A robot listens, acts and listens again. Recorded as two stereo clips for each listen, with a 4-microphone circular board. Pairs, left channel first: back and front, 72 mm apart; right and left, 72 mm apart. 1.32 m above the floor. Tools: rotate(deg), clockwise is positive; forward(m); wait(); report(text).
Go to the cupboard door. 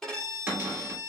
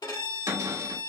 rotate(-65)
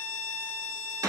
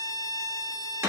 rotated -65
rotate(-30)
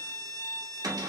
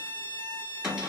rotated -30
forward(1.0)
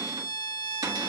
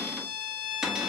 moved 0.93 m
forward(1.0)
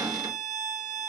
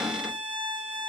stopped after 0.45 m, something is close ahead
rotate(-10)
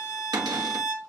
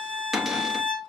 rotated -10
report("I am next to the cupboard door.")